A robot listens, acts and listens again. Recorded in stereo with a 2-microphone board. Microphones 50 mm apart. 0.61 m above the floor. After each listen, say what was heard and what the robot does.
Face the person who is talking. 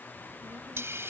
The child speaking: about 65° right or 115° right. Turn 65° right.
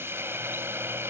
Keep listening.
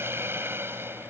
Keep listening.
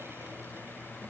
I heard a child speaking, but can't make it out now. It was about straight ahead or 50° right.